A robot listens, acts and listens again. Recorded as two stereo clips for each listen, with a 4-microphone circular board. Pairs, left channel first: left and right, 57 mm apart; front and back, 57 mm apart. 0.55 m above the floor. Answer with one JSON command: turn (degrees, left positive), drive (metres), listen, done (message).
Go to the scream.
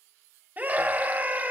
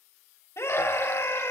{"turn": -35}
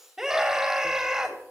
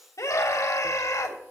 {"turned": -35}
{"turn": -10}
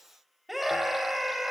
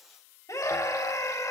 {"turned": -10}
{"drive": 1.0}
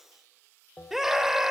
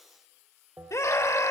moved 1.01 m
{"turn": -10}
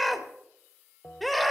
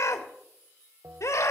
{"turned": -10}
{"drive": 1.0}
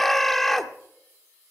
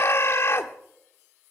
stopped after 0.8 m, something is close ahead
{"done": "I am next to the scream."}